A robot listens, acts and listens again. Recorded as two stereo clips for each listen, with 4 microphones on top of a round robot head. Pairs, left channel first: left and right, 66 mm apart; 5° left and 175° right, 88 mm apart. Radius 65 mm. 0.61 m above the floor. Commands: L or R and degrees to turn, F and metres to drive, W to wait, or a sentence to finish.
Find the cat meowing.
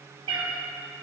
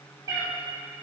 R110
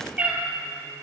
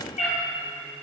R20
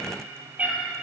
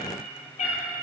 R20
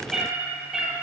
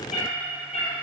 Facing the cat meowing, 2 to 4 m away.